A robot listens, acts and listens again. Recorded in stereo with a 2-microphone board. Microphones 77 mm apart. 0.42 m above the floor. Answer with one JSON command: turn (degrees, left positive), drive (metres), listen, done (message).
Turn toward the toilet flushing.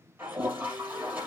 {"turn": -25}
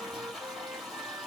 {"done": "Facing the toilet flushing."}